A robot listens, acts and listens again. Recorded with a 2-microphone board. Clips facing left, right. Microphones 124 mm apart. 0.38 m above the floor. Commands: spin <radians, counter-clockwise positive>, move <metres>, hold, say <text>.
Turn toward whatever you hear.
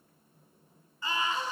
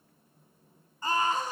spin -0.79
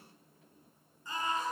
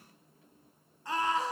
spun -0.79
spin -1.48
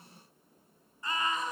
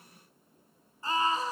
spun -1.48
spin -0.61
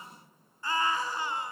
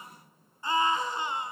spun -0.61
spin -0.35
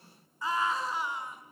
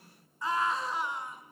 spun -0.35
say Facing the scream, over 4 m away.